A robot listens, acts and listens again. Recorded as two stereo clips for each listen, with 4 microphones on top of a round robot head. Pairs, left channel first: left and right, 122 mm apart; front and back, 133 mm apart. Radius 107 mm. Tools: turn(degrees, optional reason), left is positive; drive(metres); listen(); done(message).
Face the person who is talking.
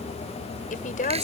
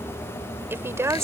turn(degrees=115, reason="The woman speaking: 115° left.")
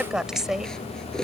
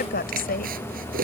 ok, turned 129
done("Facing the woman speaking.")